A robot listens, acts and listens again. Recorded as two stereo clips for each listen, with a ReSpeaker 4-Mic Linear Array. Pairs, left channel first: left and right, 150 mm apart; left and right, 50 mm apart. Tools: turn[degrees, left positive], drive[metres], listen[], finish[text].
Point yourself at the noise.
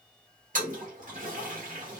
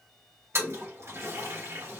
Thought: The toilet flushing: about 65° right or 115° right.
Action: turn[-65]
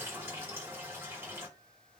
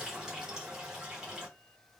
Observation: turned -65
Thought: So it is at 15° right.
Action: turn[-15]
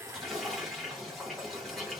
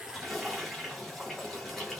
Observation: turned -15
Action: finish[Facing the toilet flushing.]